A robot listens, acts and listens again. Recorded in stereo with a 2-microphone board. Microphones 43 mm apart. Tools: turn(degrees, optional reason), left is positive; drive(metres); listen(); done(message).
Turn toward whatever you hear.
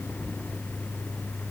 listen()
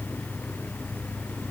listen()
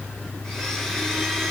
turn(degrees=30)
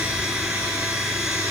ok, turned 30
turn(degrees=-20, reason="So it is at 20° right.")
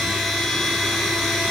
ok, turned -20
done("Facing the blender, 2 to 4 m away.")